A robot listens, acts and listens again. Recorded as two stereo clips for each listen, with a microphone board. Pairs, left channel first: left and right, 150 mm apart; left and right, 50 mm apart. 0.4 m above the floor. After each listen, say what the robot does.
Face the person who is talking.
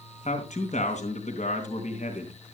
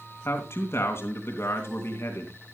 Turn 55° left.
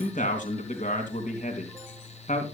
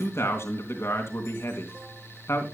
Turn 65° left.
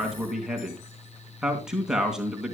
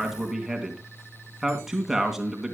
Facing the man speaking, 2 to 4 m away.